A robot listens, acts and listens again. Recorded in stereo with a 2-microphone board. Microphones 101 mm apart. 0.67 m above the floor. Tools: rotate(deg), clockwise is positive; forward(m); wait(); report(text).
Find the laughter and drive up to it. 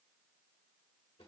wait()
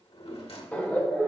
rotate(-15)
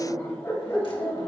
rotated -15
rotate(-150)
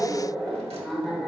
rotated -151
forward(1.0)
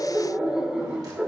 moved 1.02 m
rotate(10)
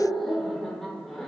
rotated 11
forward(1.0)
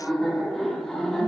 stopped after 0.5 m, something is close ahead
report("I am next to the laughter.")